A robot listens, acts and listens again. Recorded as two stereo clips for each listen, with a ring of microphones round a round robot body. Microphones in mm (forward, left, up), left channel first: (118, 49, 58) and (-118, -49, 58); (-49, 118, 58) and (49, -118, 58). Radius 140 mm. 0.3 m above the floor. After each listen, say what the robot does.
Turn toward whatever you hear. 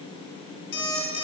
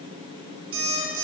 Turn 30° right.
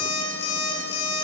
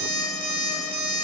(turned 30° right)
Turn 15° right.
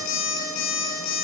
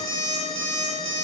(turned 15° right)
Facing the alarm clock.